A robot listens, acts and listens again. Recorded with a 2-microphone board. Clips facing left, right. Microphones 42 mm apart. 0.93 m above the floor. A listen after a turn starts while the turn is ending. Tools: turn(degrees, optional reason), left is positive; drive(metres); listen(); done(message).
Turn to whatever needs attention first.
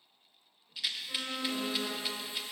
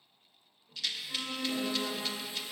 turn(degrees=30, reason="The alarm: about 30° left or 150° left.")
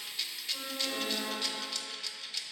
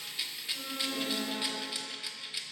turn(degrees=120, reason="So it is at 120° left.")
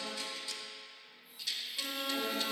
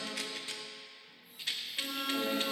done("Found it: an alarm, straight ahead, 2 to 4 m away.")